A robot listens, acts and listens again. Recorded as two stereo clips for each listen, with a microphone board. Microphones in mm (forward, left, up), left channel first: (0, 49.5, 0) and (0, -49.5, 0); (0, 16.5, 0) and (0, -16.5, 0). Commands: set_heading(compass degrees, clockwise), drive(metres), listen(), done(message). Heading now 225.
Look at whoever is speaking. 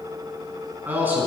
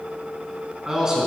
set_heading(245)
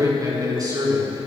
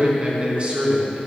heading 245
set_heading(25)
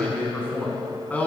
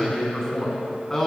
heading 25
set_heading(10)
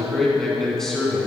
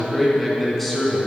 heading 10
done("Found it: a man speaking, straight ahead, 2 to 4 m away.")